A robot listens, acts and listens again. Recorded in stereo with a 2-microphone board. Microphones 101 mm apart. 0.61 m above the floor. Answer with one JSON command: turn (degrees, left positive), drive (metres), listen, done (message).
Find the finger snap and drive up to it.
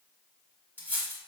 {"listen": true}
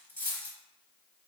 {"listen": true}
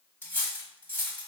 {"done": "I can't make out a finger snap, only cutlery clinking."}